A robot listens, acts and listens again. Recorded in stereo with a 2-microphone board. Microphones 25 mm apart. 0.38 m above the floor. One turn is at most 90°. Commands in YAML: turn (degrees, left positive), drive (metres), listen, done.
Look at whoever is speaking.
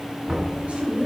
turn: -55
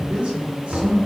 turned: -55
turn: -70
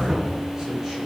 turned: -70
listen: true
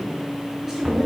turn: -25
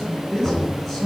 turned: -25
done: "Facing the man speaking."